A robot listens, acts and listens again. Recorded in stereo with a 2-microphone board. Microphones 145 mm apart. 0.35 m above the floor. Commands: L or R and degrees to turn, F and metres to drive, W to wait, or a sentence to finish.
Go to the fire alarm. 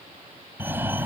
R30
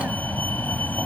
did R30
L15
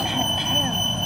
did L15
F1.0
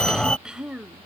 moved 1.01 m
L10
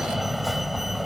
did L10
F1.0
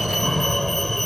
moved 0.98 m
F1.0
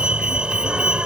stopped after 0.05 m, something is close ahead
R10
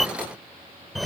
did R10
Arrived at the fire alarm, straight ahead.